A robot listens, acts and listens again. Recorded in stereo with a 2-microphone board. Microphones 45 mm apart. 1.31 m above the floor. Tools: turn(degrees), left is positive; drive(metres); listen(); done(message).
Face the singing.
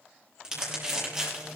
turn(degrees=30)
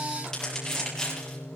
turn(degrees=120)
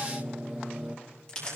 turn(degrees=-20)
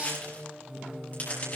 turn(degrees=-10)
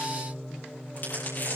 done("Facing the singing, 1 to 2 m away.")